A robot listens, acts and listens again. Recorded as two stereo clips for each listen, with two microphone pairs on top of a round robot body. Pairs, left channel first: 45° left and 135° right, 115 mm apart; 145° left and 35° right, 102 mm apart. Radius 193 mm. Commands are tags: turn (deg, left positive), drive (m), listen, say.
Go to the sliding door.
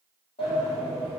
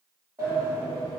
<turn deg="25"/>
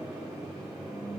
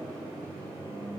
<listen/>
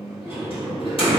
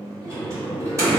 <turn deg="25"/>
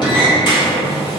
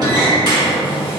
<turn deg="10"/>
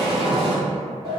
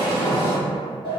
<drive m="1.0"/>
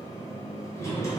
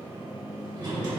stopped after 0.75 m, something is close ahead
<say>Arrived at the sliding door, straight ahead.</say>